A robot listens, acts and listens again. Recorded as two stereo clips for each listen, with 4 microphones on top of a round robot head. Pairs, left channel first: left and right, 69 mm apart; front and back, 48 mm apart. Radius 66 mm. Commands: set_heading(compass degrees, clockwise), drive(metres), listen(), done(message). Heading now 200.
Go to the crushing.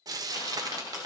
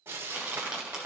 set_heading(95)
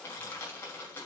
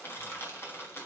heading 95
set_heading(65)
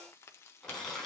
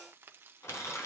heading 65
drive(1.0)
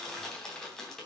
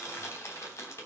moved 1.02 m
drive(1.0)
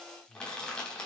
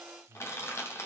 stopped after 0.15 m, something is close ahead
set_heading(55)
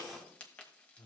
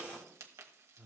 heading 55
done("Blocked. The crushing is further on, straight ahead.")